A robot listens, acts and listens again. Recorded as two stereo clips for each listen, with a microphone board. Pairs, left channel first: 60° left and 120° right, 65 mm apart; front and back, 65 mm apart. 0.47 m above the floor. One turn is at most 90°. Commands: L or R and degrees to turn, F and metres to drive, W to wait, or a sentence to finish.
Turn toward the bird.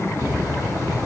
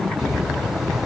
R90
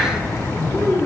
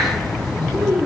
R10
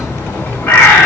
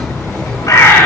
Found it: a bird, straight ahead, 1 to 2 m away.